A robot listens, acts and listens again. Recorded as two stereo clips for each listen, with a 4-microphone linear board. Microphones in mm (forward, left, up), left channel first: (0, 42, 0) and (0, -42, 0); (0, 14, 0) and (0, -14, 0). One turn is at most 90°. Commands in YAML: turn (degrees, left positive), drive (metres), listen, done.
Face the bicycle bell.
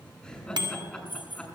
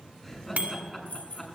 turn: -65
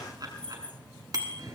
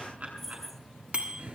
turn: -55
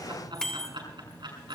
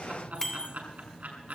turn: 10
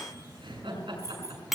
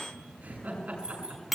done: "Facing the bicycle bell, 2 to 4 m away."